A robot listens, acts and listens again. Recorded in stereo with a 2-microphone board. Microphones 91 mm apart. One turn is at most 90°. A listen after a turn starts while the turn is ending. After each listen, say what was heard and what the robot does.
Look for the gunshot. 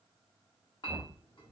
Keep listening.
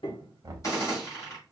The gunshot: about 40° left or 140° left. Turn 40° left.
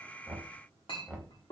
Keep listening.
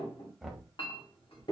I heard a gunshot, but can't make it out now. It was about straight ahead or 100° left.